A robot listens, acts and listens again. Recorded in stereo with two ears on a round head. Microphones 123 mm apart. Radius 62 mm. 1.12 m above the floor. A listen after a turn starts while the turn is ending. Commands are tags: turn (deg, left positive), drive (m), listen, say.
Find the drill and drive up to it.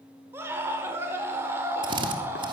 <turn deg="-35"/>
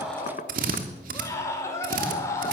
<turn deg="-105"/>
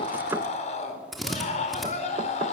<drive m="1.0"/>
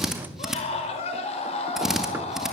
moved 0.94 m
<drive m="1.0"/>
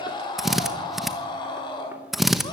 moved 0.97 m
<drive m="1.0"/>
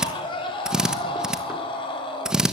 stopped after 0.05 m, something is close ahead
<say>Arrived at the drill, straight ahead.</say>